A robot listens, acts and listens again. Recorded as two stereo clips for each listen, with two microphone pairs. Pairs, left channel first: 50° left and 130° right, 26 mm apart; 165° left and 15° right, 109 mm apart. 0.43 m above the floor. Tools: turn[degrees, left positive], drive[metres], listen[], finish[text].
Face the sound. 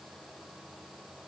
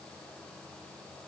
Action: listen[]
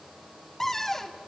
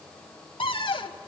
Thought: The cupboard door: 125° left.
Action: turn[125]
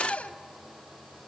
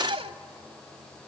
Thought: The cupboard door is now 10° left.
Action: turn[10]
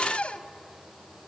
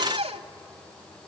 Action: finish[Facing the cupboard door, 1 to 2 m away.]